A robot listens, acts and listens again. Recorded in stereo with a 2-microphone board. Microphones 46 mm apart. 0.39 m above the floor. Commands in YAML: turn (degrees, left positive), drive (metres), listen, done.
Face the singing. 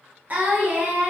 turn: -40
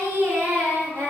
turn: -100
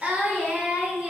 turn: -30
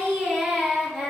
done: "Facing the singing."